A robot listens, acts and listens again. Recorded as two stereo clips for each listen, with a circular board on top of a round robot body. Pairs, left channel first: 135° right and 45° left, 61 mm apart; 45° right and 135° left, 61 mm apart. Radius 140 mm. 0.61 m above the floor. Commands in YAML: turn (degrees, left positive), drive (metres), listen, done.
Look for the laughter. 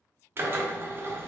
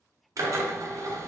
listen: true
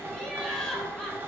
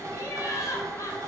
turn: -55
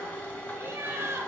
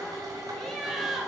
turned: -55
turn: 55
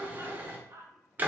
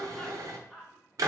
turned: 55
turn: 45
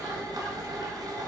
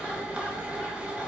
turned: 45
listen: true
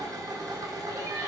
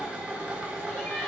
turn: 25
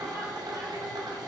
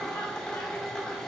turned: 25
listen: true
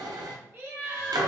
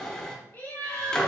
done: "Facing the laughter, 1 to 2 m away."